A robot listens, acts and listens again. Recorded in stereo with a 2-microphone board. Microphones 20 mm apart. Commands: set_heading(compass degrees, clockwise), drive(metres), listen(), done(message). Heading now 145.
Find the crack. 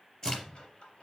set_heading(110)
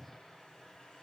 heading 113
listen()
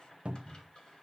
done("I heard a crack, but can't make it out now. It was about 5° left or 110° left.")